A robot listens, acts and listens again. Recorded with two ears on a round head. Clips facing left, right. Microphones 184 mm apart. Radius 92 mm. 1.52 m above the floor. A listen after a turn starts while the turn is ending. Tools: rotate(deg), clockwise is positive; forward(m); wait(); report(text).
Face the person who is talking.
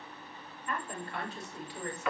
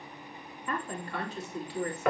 rotate(65)
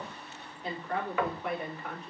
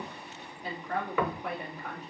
report("Found it: a woman speaking, straight ahead.")